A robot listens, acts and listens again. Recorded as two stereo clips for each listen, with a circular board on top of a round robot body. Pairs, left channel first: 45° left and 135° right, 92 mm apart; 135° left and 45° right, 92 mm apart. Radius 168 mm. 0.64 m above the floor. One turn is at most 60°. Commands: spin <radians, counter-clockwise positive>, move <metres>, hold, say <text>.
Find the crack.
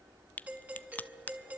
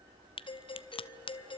spin 1.05
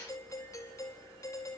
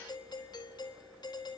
spin 1.05
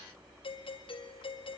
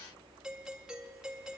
say I heard a crack from this way, but can't make it out now.